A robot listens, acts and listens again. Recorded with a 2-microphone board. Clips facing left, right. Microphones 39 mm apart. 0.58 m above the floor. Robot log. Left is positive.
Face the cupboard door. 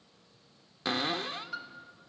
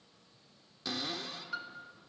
note: The cupboard door: about 50° left or 130° left.
cmd yaw +50
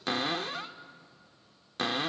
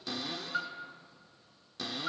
note: So it is at 70° left.
cmd yaw +70
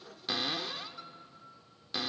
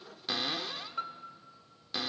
end: Facing the cupboard door, under 1 m away.